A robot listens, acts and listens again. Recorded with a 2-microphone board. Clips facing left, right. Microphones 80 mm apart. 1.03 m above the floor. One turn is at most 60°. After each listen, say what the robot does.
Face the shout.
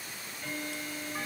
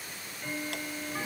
Keep listening.
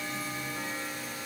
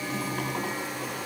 Keep listening.
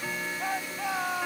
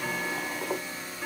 Turn 60° left.
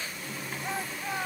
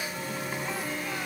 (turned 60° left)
Turn 30° left.
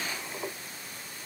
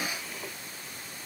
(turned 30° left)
Keep listening.
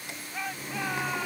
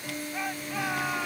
Facing the shout.